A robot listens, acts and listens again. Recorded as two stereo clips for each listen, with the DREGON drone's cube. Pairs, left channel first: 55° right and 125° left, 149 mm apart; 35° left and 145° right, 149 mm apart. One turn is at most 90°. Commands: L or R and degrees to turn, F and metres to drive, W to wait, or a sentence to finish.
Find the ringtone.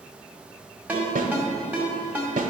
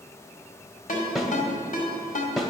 L45
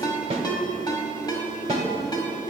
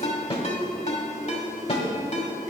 Found it: a ringtone, straight ahead.